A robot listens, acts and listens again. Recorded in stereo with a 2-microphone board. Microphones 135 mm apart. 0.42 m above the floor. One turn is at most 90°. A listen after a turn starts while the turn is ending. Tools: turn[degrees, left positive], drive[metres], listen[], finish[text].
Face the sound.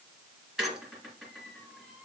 Action: turn[-30]
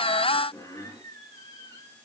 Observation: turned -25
Thought: So it is at 20° left.
Action: turn[20]
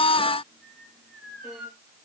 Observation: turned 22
Action: finish[Facing the squeak, 2 to 4 m away.]